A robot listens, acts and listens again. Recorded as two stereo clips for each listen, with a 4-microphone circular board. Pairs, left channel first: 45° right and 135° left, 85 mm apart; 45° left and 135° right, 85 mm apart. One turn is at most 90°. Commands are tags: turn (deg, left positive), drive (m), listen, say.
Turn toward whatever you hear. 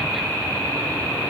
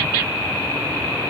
<listen/>
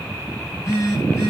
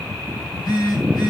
<turn deg="10"/>
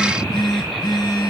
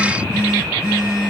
<say>Facing the phone buzzing, over 4 m away.</say>